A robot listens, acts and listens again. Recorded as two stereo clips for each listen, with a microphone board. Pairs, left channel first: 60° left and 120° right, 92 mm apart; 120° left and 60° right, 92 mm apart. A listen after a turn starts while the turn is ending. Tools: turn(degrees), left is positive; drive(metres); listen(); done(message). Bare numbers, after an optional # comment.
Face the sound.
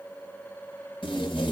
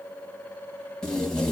# The tape being pulled: 40° left.
turn(40)
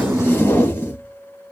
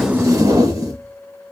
# The tape being pulled is now 10° right.
turn(-10)
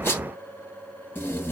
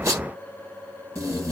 done("Found it: tape being pulled, straight ahead, under 1 m away.")